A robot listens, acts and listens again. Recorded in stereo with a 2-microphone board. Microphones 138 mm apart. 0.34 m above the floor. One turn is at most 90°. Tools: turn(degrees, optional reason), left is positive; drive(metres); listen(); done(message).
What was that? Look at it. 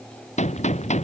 turn(degrees=55, reason="The gunshot: about 55° left or 125° left.")
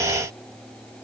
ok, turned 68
listen()
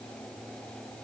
done("I heard a gunshot, but can't make it out now. It was about 10° right or 55° left.")